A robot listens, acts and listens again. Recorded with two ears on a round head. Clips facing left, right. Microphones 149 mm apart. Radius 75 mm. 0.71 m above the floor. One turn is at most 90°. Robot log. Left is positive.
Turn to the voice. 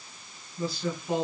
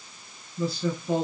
cmd yaw -90
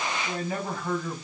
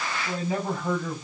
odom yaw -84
note: So it is at 20° right.
cmd yaw -20
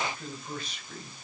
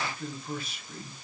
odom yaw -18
end: Facing the man speaking.